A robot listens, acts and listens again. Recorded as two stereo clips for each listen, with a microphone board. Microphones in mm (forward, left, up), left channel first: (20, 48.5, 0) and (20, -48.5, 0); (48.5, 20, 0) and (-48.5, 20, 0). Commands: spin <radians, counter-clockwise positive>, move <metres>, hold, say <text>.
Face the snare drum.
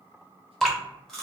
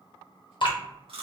hold
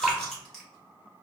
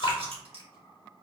hold
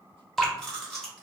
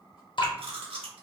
say I can't make out a snare drum, only chewing and dripping.